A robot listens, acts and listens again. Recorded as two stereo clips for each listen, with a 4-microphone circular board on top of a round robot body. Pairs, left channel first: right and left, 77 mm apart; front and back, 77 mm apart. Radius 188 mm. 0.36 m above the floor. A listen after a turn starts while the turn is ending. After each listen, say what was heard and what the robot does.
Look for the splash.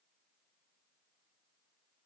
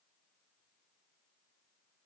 Keep listening.
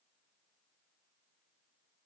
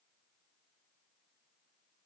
Keep listening.
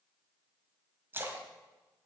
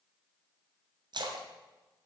The splash: 155° left. Turn 155° left.
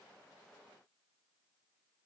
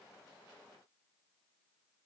I heard a splash from this way, but can't make it out now.